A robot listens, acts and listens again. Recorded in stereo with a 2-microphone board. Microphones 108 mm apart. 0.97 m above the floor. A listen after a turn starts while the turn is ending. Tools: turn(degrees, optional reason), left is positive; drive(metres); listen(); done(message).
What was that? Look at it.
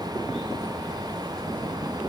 listen()
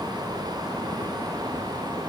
listen()
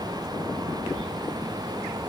done("I can't make out anything to turn to.")